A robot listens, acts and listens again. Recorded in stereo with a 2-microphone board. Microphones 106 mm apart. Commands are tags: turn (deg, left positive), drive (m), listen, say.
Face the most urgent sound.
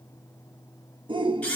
<turn deg="-50"/>
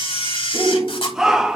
<say>Facing the shout, 1 to 2 m away.</say>